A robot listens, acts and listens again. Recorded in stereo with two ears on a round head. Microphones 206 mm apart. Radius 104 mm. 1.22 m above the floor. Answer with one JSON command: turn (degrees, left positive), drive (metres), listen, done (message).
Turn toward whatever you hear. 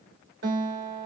{"turn": -45}
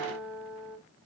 {"done": "Facing the guitar."}